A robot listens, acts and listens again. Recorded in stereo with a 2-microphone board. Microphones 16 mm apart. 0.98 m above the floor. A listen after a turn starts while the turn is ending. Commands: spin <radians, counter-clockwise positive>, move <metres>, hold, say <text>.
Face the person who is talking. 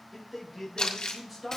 spin -0.52
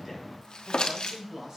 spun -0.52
spin -2.44
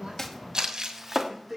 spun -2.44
say Facing the man speaking, over 4 m away.